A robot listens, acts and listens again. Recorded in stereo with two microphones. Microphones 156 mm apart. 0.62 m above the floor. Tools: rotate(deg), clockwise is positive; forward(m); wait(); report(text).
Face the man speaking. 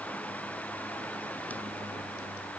wait()
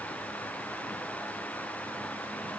wait()
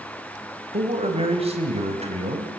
rotate(40)
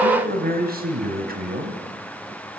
rotate(105)
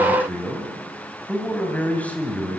rotate(-10)
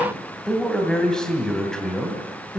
report("Facing the man speaking, 2 to 4 m away.")